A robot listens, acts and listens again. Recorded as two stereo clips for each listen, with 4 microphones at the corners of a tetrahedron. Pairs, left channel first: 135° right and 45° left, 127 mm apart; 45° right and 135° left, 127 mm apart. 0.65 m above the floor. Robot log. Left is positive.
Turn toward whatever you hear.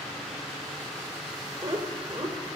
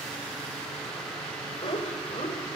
note: The laughter: 10° right.
cmd yaw -10
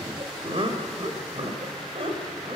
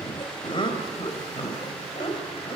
end: Found it: laughter, straight ahead, over 4 m away.